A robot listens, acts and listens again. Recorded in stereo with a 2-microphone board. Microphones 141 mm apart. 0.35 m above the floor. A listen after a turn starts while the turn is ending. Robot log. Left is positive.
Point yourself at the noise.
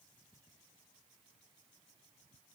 cmd idle
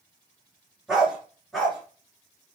cmd yaw +30
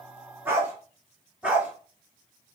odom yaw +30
cmd yaw -30
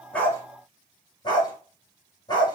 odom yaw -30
note: So it is at 30° left.
cmd yaw +30
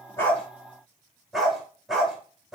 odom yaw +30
end: Facing the dog barking.